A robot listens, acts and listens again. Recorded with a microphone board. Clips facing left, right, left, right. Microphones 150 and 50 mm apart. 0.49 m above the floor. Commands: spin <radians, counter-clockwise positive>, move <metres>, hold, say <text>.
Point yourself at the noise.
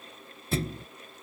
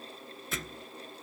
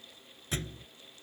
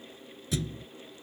spin 0.61
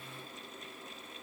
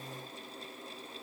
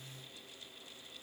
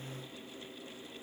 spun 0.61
hold
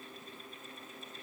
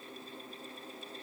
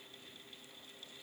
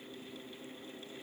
say I heard a thud, but can't make it out now. It was about straight ahead or 110° left.